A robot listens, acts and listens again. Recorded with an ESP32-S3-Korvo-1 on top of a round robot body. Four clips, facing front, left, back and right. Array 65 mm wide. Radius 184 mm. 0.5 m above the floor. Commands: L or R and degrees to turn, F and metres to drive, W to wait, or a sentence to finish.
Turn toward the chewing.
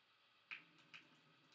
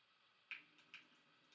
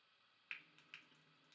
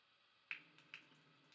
W
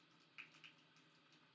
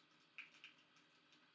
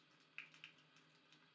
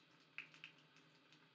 W
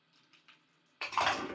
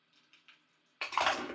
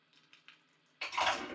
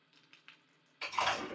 L60
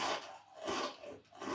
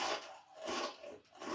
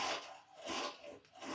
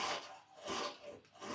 L30
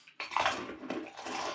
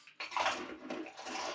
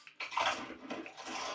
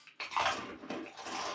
Facing the chewing.